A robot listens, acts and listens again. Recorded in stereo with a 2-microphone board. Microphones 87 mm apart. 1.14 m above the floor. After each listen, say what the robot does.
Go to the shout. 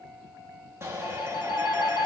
Turn 30° right.
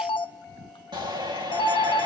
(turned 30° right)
Turn 120° right.
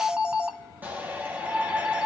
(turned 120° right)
Turn 20° right.
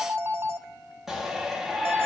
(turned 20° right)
Drive 1.0 m forward.
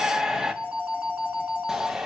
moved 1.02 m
Drive 1.0 m forward.
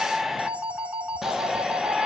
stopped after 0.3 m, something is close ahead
Arrived at the shout, straight ahead.